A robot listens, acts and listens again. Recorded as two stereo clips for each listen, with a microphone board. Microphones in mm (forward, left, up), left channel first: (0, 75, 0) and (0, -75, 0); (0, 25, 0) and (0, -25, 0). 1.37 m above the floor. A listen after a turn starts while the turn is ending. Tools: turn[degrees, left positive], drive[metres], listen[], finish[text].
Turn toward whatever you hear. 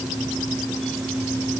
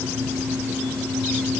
Action: listen[]
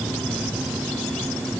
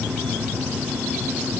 Action: listen[]
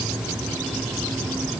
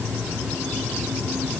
Action: finish[I can't make out anything to turn to.]